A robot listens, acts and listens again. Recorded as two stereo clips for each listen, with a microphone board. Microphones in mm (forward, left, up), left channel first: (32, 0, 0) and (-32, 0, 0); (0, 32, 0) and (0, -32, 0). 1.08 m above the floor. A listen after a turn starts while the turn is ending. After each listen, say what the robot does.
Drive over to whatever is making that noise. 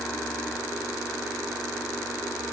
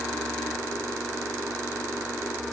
Keep listening.
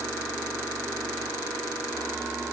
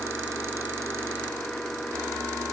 Keep listening.
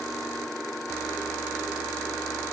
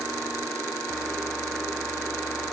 I can't make out anything.